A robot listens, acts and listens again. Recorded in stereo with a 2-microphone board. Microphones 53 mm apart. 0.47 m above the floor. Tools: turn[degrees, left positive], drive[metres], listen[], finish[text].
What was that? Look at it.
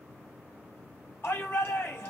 Thought: The shout: about 45° left or 135° left.
Action: turn[45]
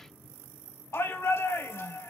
Thought: So it is at 85° left.
Action: turn[85]
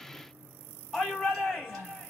Action: finish[Facing the shout.]